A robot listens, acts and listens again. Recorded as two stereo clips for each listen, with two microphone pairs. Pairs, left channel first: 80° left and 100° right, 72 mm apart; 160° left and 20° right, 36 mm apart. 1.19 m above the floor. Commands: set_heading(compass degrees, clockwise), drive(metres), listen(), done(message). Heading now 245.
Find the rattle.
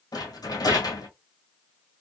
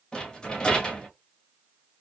set_heading(145)
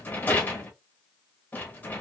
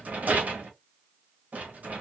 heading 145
set_heading(125)
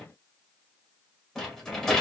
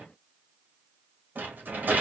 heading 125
done("Facing the rattle.")